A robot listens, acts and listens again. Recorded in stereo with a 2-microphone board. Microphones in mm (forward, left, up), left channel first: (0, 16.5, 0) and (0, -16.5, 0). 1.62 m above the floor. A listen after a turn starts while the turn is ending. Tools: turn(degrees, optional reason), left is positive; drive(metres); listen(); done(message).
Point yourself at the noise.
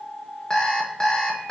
turn(degrees=25, reason="The alarm clock: about 25° left or 155° left.")
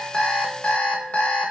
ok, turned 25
turn(degrees=125, reason="So it is at 125° left.")
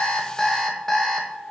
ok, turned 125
turn(degrees=15, reason="The alarm clock is now 15° left.")
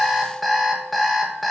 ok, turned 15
done("Found it: an alarm clock, straight ahead.")